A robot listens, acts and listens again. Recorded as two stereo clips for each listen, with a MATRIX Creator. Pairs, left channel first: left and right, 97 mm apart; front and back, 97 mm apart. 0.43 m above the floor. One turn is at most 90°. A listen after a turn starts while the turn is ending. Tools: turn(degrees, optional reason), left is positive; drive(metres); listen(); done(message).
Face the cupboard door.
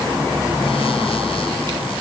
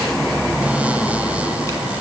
listen()
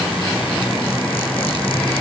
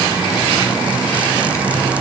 listen()
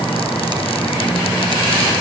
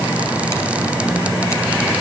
done("I can't make out a cupboard door to turn to.")